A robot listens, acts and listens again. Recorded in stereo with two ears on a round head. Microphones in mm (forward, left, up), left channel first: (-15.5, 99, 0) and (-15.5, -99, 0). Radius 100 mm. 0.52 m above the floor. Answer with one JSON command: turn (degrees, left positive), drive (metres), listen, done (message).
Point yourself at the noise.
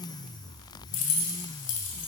{"turn": 60}
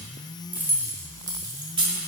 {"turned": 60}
{"turn": -25}
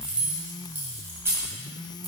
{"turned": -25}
{"turn": -10}
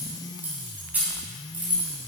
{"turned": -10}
{"done": "Facing the keys jangling, 2 to 4 m away."}